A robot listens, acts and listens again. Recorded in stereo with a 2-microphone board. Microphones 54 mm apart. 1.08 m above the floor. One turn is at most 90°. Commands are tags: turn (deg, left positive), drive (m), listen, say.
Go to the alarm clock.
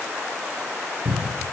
<listen/>
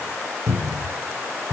<listen/>
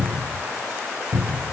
<say>I can't make out an alarm clock to turn to.</say>